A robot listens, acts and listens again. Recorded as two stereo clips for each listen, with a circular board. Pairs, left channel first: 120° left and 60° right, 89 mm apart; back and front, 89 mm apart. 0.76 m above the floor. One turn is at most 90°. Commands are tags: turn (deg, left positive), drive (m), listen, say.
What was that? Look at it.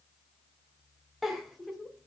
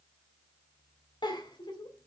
<turn deg="-90"/>
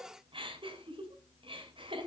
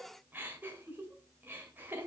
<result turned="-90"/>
<turn deg="-65"/>
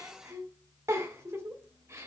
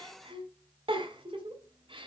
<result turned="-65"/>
<say>Found it: a giggle, straight ahead.</say>